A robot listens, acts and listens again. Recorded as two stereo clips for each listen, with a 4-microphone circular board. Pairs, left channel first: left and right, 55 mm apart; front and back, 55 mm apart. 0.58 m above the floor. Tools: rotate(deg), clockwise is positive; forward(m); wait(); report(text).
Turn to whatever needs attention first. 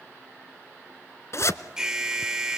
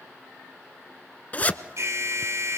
rotate(170)
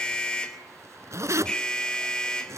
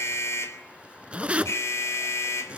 rotate(-15)
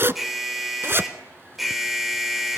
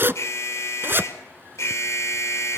report("Found it: an alarm, straight ahead.")